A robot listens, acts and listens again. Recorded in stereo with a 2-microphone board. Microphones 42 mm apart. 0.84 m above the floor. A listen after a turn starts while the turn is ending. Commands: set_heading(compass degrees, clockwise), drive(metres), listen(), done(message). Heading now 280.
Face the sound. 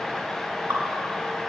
set_heading(350)
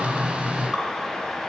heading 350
listen()
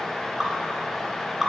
done("Found it: dripping, straight ahead.")